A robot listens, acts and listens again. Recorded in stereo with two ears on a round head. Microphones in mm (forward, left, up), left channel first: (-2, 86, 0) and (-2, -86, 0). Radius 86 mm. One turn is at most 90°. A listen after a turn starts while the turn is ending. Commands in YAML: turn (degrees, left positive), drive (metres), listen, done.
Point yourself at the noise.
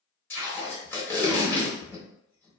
turn: 30
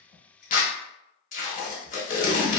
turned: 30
turn: 90
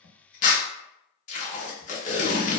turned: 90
turn: 40
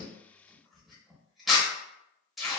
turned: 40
done: "Found it: tape being pulled, straight ahead, under 1 m away."